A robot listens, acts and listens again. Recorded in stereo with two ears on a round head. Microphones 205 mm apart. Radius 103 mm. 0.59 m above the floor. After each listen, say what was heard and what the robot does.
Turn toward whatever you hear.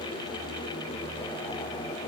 Keep listening.
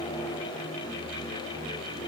Keep listening.
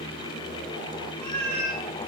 Turn 30° left.
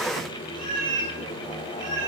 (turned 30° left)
So it is at 30° right. Turn 30° right.
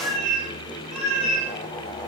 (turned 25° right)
Facing the cat meowing, 2 to 4 m away.